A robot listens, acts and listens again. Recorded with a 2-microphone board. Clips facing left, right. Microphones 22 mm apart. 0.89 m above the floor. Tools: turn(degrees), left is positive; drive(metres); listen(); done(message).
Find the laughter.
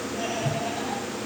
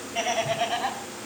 turn(degrees=-65)
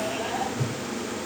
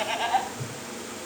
turn(degrees=-45)
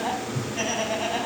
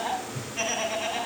turn(degrees=10)
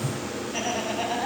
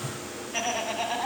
done("Found it: laughter, straight ahead.")